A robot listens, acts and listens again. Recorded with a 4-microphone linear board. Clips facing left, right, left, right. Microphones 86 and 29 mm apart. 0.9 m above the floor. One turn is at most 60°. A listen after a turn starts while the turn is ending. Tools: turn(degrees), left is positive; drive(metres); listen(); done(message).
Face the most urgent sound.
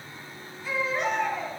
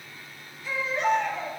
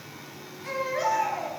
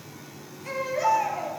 turn(degrees=40)
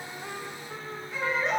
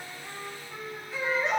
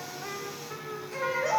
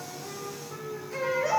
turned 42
done("Facing the baby crying.")